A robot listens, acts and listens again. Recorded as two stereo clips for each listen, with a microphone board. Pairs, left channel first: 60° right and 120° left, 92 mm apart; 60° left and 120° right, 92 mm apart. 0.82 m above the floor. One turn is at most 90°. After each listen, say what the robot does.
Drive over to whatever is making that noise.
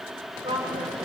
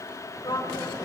Turn 90° left.
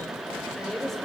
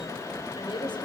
Turn 25° left.
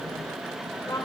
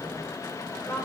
Turn 10° right.
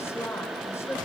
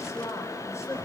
Drive 1.0 m forward.
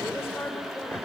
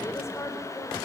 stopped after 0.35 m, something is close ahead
Something is in my way. I am facing the woman speaking but have not reached it.